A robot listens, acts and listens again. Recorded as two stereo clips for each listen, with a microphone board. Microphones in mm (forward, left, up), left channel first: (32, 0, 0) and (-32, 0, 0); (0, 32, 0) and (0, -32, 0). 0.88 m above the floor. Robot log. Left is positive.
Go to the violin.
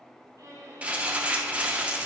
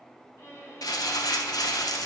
note: The violin: 140° left.
cmd yaw +140
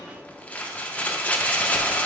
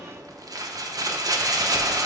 cmd idle
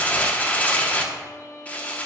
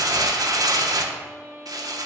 note: The violin is now 40° right.
cmd yaw -40
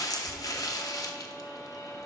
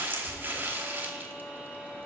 cmd idle
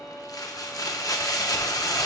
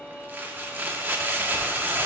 cmd idle
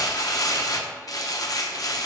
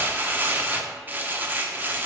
end: I heard a violin from this way, but can't make it out now. I did not reach it.